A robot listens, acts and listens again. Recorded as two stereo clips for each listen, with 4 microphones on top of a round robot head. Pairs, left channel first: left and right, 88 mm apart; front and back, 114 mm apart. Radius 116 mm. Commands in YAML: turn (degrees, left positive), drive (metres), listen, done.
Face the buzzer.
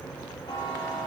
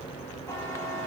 turn: 65
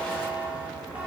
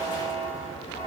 turn: -15
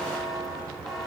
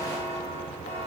done: "Facing the buzzer, 2 to 4 m away."